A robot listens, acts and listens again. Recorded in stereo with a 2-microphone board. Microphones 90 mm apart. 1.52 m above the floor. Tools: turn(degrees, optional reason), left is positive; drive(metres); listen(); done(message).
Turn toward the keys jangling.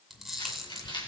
turn(degrees=55, reason="The keys jangling: about 55° left or 125° left.")
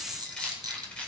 turn(degrees=15, reason="So it is at 15° left.")
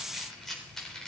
done("Facing the keys jangling.")